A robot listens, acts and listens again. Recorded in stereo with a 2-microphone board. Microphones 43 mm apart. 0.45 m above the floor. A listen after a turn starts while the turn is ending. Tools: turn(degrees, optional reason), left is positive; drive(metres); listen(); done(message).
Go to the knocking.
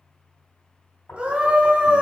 turn(degrees=60, reason="The knocking: about 60° left or 120° left.")
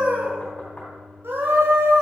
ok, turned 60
listen()
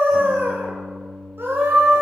listen()
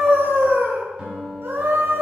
done("I heard knocking, but can't make it out now. It was about straight ahead or 60° left. I did not reach it.")